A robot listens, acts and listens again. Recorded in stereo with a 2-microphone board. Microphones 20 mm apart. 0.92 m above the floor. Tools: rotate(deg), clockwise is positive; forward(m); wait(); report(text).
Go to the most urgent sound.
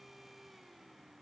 wait()
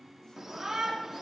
rotate(25)
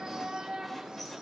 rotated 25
rotate(130)
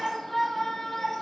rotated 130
rotate(-15)
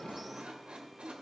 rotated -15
forward(1.0)
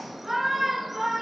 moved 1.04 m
forward(1.0)
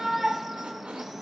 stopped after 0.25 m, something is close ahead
rotate(10)
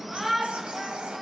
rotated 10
report("I am next to the shout.")